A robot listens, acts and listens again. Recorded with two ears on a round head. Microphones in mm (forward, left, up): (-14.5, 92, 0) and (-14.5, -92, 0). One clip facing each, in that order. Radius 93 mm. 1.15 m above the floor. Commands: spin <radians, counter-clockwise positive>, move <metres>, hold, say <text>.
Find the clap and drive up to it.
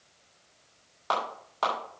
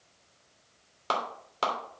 spin -0.61
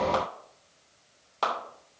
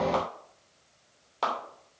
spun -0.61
move 1.0
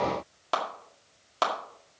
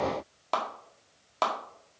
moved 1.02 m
move 1.0
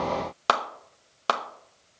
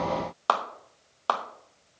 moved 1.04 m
spin 0.44
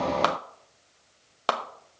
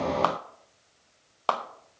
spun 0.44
spin 0.35
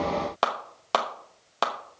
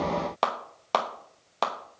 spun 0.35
move 1.0
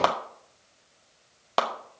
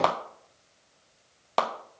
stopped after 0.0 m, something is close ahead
say Arrived at the clap, straight ahead.